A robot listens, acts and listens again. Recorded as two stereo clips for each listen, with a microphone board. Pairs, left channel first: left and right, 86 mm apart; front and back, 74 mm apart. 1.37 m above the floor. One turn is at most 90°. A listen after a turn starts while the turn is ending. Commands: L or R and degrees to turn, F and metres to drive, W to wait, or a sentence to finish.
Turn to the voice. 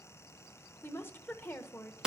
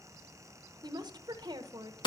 L90
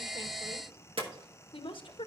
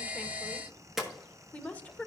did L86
L70
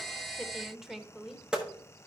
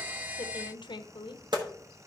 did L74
Facing the woman speaking, under 1 m away.